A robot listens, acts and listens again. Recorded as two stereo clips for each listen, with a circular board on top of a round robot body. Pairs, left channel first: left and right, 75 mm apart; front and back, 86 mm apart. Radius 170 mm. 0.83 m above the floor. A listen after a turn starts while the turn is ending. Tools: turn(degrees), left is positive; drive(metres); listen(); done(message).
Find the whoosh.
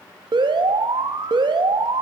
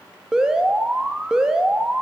listen()
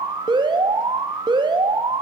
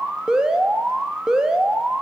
listen()
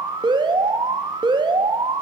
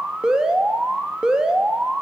done("I can't make out a whoosh, only an alarm.")